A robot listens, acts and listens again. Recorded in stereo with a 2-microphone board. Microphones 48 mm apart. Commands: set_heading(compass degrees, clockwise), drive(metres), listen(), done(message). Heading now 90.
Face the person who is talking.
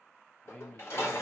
set_heading(70)
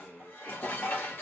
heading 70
done("Found it: a man speaking, straight ahead, 1 to 2 m away.")